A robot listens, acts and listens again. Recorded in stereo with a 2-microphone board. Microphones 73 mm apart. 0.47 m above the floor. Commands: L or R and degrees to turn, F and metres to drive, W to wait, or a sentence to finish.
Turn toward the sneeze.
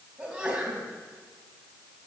R30
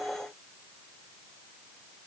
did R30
W
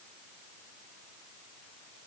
I heard a sneeze, but can't make it out now. It was about 15° left or 135° right.